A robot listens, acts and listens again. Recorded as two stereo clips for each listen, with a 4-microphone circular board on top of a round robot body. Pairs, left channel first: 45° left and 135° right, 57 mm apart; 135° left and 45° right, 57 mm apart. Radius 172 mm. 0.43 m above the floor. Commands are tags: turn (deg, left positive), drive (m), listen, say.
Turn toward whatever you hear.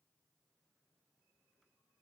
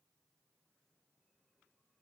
<listen/>
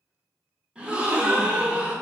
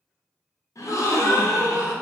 <turn deg="155"/>
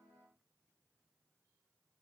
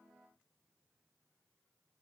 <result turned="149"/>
<say>Facing where the gasp came from. I can't hear it now.</say>